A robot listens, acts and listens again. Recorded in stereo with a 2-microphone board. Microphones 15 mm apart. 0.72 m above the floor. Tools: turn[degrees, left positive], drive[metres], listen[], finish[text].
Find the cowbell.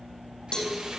Thought: The cowbell: about 55° left or 125° left.
Action: turn[55]
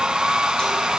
Action: listen[]
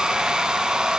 Action: listen[]
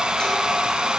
Action: finish[I heard a cowbell, but can't make it out now. It was about straight ahead or 70° left.]